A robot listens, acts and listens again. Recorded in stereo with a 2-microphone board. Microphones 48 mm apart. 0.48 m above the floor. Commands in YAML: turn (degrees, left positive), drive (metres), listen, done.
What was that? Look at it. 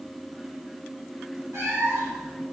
turn: -75
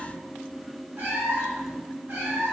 turn: -60
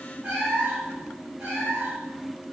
turn: -40
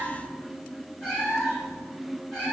done: "Found it: a cat meowing, straight ahead, 2 to 4 m away."